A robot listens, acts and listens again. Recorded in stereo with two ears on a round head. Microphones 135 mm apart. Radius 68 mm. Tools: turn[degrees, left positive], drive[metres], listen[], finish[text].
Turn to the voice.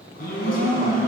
Thought: The woman speaking: about 65° left or 115° left.
Action: turn[65]
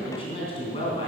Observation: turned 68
Thought: So it is at 40° left.
Action: turn[40]
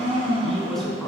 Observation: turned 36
Action: finish[Found it: a woman speaking, straight ahead.]